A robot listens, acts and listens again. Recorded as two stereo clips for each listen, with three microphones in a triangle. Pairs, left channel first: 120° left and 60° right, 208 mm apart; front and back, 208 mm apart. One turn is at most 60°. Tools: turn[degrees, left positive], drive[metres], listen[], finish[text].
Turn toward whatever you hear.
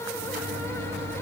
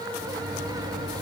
Thought: The microwave: 95° right.
Action: turn[-60]
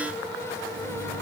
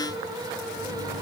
Thought: The microwave is now 55° right.
Action: turn[-55]
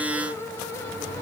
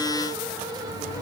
Thought: The microwave is now 10° left.
Action: turn[10]
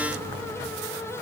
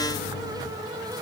Action: finish[Found it: a microwave, straight ahead.]